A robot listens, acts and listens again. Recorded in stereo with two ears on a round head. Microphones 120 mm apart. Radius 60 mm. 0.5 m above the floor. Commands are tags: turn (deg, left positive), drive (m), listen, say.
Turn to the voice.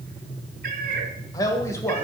<turn deg="20"/>
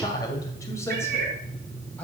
<turn deg="30"/>
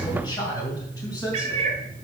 <turn deg="25"/>
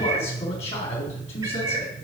<turn deg="135"/>
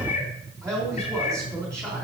<turn deg="-20"/>
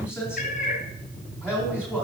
<turn deg="-10"/>
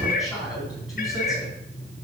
<say>Found it: a man speaking, straight ahead.</say>